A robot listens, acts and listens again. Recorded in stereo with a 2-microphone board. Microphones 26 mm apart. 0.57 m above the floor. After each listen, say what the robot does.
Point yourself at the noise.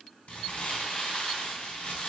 Turn 55° left.
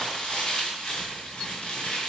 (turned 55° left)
Turn 65° left.
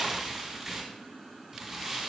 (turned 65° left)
Turn 10° right.
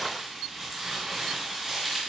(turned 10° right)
Found it: crumpling, straight ahead.